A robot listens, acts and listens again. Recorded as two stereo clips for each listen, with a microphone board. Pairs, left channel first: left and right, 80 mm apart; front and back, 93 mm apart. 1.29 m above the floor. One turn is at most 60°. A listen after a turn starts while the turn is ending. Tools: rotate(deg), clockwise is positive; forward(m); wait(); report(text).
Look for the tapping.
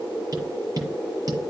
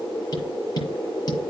rotate(45)
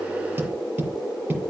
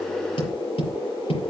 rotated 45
rotate(20)
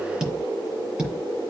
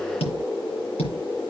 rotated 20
report("Facing the tapping.")